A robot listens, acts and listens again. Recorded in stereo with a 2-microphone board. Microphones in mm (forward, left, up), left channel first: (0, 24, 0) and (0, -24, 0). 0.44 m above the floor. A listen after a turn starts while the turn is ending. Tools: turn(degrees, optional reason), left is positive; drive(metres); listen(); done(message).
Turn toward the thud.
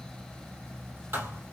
turn(degrees=-55, reason="The thud: about 55° right or 125° right.")
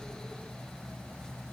listen()
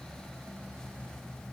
done("I heard a thud, but can't make it out now. It was about straight ahead or 70° right.")